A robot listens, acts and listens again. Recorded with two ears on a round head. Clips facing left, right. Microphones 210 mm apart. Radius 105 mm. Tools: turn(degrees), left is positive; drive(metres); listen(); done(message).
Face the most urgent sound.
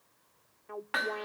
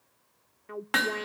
turn(degrees=-35)
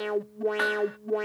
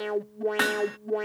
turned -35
done("Found it: an alarm, straight ahead.")